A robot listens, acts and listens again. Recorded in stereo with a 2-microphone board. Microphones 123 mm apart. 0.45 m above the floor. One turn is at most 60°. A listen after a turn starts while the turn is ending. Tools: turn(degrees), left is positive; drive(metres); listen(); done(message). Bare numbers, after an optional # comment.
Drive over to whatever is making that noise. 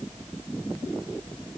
listen()
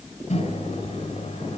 # The microwave: about 75° left or 105° left.
turn(60)
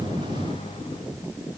# So it is at 40° left.
turn(40)
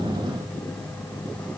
# The microwave is now 10° left.
turn(10)
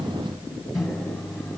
drive(1.0)
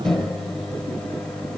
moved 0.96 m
drive(1.0)
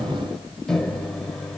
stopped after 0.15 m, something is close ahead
done("I am next to the microwave.")